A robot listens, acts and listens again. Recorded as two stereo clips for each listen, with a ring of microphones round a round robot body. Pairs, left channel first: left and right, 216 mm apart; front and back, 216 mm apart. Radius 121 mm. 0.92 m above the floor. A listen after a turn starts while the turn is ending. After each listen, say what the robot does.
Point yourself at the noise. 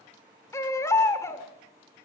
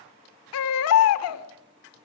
Turn 10° left.
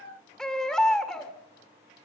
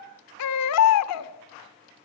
Facing the baby crying, 1 to 2 m away.